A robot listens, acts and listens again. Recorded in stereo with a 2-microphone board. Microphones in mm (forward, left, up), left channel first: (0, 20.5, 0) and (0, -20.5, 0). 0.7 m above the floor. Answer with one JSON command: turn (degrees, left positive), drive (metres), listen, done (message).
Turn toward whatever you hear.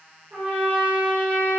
{"turn": -35}
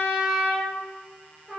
{"done": "Facing the trumpet."}